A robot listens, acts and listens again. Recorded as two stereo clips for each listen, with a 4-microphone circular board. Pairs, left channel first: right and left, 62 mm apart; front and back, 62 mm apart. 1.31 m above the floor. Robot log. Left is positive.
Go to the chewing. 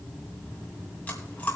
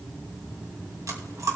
note: The chewing: 155° right.
cmd yaw -155
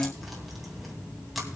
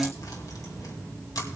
cmd fwd 1.0
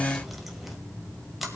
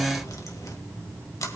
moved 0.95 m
cmd fwd 1.0
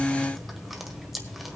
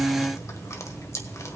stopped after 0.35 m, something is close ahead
end: I am next to the chewing.